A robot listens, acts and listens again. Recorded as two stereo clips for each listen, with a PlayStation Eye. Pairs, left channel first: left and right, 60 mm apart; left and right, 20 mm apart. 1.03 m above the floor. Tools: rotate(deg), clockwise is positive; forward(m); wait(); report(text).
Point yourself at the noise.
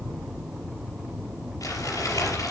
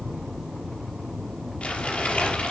rotate(-70)
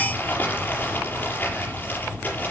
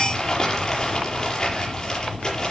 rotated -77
rotate(-35)
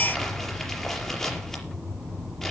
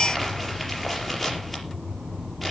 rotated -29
report("Facing the crumpling, over 4 m away.")